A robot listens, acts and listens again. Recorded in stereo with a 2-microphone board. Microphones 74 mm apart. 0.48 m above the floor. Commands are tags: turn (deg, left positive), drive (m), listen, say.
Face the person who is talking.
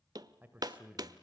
<turn deg="-15"/>
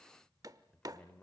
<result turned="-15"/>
<turn deg="20"/>
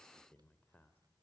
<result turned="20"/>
<turn deg="20"/>
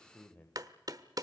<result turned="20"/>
<turn deg="20"/>
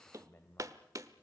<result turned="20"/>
<turn deg="25"/>
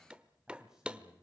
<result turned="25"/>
<turn deg="-10"/>
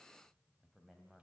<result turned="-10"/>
<say>Facing the man speaking.</say>